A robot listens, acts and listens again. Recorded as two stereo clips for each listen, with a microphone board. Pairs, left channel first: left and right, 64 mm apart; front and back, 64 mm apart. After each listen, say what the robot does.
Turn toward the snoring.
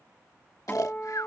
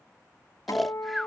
Turn 90° left.
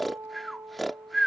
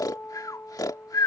Found it: snoring, straight ahead.